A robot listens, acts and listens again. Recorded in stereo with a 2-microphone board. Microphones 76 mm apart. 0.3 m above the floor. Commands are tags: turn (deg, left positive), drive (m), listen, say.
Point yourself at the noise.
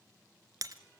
<turn deg="-50"/>
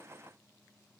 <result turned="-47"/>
<listen/>
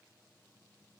<say>I heard breaking glass, but can't make it out now. It was about 5° right or 85° right.</say>